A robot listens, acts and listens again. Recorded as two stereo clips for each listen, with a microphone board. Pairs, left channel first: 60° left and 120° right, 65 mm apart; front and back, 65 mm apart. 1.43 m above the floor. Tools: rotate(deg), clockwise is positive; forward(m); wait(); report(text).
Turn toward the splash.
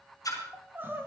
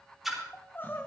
rotate(-95)
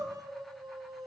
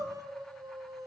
report("Facing where the splash came from. I can't hear it now.")